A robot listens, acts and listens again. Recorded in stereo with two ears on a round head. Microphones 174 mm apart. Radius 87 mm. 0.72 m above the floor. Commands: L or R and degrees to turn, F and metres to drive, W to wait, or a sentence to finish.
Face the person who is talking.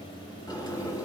W
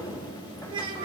R25
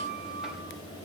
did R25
W
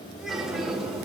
W
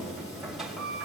I heard a child speaking, but can't make it out now. It was about straight ahead or 130° right.